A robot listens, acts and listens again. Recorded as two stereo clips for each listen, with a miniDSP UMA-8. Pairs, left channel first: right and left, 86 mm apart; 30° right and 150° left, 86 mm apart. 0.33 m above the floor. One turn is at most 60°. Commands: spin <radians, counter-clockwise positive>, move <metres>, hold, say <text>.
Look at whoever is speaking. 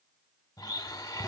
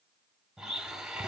hold
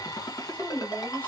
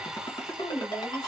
spin -0.44
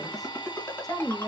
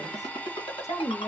spin -0.26
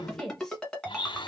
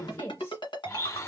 say Facing the woman speaking, 1 to 2 m away.